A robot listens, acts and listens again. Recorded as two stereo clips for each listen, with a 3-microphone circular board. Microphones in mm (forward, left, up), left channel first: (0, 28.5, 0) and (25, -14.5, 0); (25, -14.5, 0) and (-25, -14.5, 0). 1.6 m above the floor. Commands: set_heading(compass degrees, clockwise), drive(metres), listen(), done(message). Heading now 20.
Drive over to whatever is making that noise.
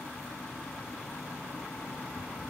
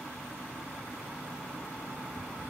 listen()
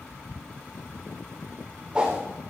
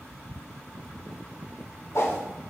set_heading(10)
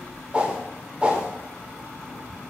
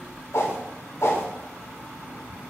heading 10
drive(1.0)
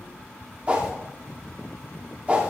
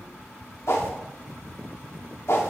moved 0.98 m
drive(1.0)
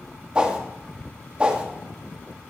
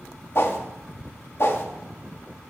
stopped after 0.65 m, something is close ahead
done("Arrived at the whoosh, straight ahead.")